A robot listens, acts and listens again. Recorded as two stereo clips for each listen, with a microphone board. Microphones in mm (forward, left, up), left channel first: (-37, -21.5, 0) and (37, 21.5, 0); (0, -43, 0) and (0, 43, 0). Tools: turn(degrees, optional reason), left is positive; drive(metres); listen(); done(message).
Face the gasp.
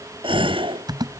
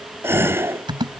turn(degrees=30, reason="The gasp: 30° left.")
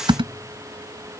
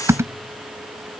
done("I heard a gasp from this way, but can't make it out now.")